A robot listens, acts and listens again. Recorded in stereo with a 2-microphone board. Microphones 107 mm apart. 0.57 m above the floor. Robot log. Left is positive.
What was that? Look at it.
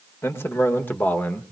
cmd yaw +30
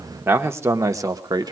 note: So it is at 40° right.
cmd yaw -40
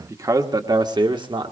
note: The man speaking is now 50° right.
cmd yaw -50
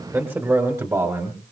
note: The man speaking is now 30° right.
cmd yaw -30
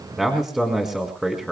end: Facing the man speaking.